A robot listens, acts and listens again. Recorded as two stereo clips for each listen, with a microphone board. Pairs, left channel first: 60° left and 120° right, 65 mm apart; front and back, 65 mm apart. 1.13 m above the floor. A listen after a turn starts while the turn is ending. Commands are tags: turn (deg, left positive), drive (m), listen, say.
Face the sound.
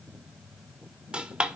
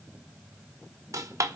<turn deg="170"/>
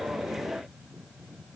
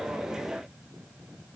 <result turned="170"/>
<say>I heard a dropped coin from this way, but can't make it out now.</say>